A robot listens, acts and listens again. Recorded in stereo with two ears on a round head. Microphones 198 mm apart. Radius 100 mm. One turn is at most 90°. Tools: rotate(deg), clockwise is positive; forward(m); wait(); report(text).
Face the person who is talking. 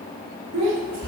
rotate(90)
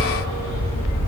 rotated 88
wait()
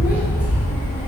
wait()
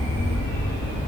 report("I heard a child speaking from this way, but can't make it out now.")